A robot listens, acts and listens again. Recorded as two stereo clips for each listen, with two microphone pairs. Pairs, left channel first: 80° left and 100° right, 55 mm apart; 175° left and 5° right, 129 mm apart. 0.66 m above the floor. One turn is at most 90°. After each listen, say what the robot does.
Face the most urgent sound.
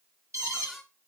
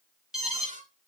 Turn 85° right.
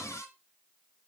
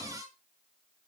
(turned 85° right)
Keep listening.
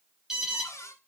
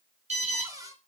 Turn 20° right.
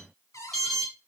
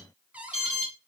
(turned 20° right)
Found it: an alarm, straight ahead.